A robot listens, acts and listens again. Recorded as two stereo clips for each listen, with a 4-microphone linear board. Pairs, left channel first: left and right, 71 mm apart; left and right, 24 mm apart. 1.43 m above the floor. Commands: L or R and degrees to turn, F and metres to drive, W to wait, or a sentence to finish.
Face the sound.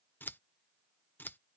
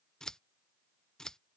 L30
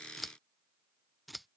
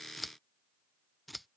Facing the scissors.